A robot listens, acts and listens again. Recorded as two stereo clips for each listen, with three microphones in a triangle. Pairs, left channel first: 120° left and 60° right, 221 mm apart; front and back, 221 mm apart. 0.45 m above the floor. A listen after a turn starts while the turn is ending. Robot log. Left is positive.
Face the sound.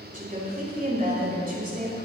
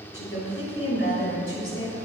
note: The woman speaking: 15° right.
cmd yaw -15
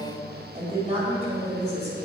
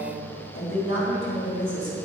end: Facing the woman speaking.